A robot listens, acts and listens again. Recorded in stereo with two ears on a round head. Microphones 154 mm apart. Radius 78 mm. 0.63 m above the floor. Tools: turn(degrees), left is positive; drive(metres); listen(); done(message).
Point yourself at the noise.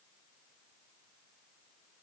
listen()
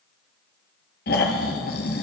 turn(degrees=55)
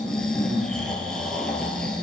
done("Found it: snoring, straight ahead.")